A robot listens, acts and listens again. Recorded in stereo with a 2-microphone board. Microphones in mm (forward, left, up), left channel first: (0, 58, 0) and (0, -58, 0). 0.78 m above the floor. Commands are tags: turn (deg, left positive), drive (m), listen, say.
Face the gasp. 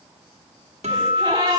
<turn deg="-35"/>
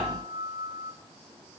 <listen/>
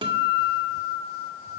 <say>I heard a gasp, but can't make it out now. It was about straight ahead or 110° right.</say>